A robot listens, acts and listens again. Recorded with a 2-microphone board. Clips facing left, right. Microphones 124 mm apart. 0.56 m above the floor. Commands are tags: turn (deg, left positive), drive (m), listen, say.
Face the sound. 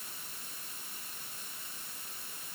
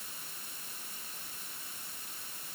<listen/>
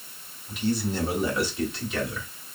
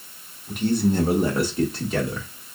<turn deg="-40"/>
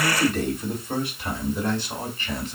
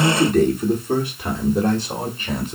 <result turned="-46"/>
<turn deg="-45"/>
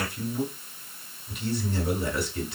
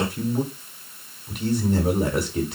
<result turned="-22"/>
<turn deg="-125"/>
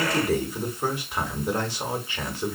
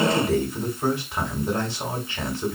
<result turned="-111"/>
<turn deg="10"/>
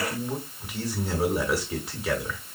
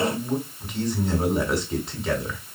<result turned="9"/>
<say>Found it: a man speaking, straight ahead, 1 to 2 m away.</say>